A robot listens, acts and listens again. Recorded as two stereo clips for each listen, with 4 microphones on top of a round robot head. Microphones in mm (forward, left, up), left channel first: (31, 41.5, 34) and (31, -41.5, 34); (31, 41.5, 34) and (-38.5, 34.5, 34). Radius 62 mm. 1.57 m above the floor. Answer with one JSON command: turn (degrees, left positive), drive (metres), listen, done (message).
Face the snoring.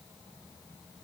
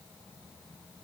{"listen": true}
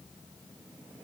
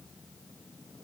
{"listen": true}
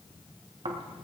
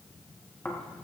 {"turn": -70}
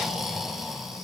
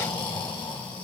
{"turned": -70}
{"done": "Facing the snoring."}